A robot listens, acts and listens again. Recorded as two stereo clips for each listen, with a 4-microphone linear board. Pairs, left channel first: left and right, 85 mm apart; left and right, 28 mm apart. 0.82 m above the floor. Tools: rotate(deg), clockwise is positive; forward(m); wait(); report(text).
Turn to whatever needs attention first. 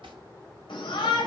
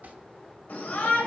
rotate(-70)
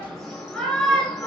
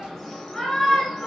report("Found it: a shout, straight ahead, 2 to 4 m away.")